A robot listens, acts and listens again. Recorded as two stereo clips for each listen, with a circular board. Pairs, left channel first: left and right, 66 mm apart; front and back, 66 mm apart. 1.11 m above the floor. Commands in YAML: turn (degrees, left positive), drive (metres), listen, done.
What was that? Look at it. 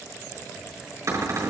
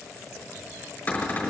turn: -65
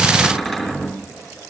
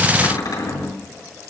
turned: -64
done: "Found it: a cupboard door, straight ahead."